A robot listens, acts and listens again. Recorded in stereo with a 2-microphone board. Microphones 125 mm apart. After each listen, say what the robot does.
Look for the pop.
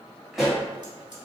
Turn 30° right.
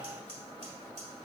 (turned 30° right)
Keep listening.
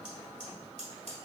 I heard a pop, but can't make it out now. It was about 25° left or 145° right.